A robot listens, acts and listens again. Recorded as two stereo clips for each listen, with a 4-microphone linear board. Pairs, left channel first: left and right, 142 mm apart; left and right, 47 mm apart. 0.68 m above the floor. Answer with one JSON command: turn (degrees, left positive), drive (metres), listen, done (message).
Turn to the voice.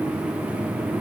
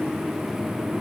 {"listen": true}
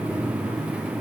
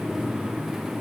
{"listen": true}
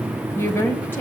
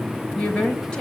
{"turn": 15}
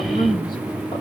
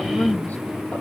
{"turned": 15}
{"turn": 150}
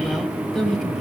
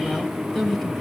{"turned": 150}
{"done": "Facing the woman speaking."}